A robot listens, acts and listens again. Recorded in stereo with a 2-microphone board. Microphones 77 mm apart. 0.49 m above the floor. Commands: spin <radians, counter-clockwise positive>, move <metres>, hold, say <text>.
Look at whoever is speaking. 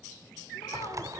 hold
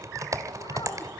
hold
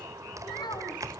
spin 1.57
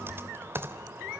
hold
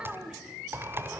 spin -0.17
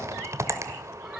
hold
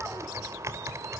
hold
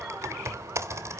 say Facing where the child speaking came from. I can't hear it now.